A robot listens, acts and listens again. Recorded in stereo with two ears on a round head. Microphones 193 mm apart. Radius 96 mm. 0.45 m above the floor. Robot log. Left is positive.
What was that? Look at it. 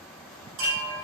note: The chime: about 65° right or 115° right.
cmd yaw -65
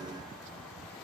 cmd idle
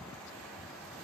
cmd idle
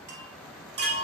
note: So it is at 50° right.
cmd yaw -50
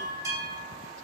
note: The chime is now 15° right.
cmd yaw -15
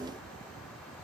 cmd idle
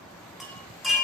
end: Facing the chime, under 1 m away.